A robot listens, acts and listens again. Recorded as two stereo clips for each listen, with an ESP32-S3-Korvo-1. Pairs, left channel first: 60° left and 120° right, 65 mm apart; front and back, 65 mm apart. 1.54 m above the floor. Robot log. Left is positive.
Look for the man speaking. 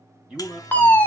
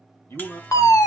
note: The man speaking: 45° right.
cmd yaw -45
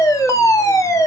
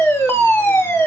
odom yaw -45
cmd idle
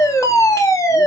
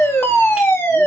cmd idle
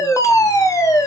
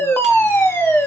end: Facing where the man speaking came from. I can't hear it now.